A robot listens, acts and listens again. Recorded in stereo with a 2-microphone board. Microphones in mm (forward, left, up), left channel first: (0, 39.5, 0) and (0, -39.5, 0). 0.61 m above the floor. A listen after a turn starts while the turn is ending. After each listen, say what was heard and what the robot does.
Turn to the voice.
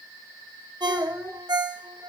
The child speaking: about 40° right or 140° right. Turn 40° right.
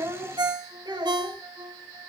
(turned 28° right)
So it is at 115° right. Turn 115° right.
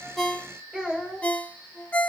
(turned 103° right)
The child speaking is now 10° right. Turn 10° right.
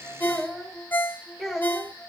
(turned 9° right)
Found it: a child speaking, straight ahead, 2 to 4 m away.